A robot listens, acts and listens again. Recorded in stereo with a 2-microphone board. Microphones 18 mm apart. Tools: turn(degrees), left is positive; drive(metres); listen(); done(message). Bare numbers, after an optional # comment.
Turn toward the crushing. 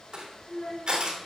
# The crushing: about 55° right or 125° right.
turn(-55)
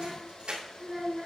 # So it is at 70° right.
turn(-70)
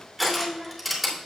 done("Facing the crushing.")